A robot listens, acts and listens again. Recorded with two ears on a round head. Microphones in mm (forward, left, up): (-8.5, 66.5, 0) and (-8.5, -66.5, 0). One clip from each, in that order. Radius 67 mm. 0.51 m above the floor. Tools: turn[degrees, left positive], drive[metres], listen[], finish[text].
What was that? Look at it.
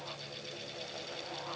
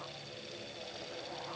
Action: listen[]
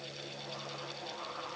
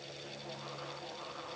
Action: listen[]
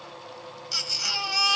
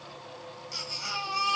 Thought: The baby crying: about 55° left or 125° left.
Action: turn[55]
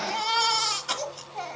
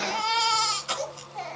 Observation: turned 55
Action: finish[Facing the baby crying.]